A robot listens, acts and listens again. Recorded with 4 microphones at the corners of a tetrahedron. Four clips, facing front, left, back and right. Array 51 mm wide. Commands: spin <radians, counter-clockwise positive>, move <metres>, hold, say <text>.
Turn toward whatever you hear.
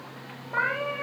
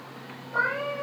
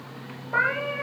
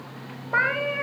spin -1.75
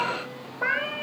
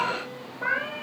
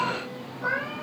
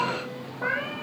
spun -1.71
say Found it: a cat meowing, straight ahead, over 4 m away.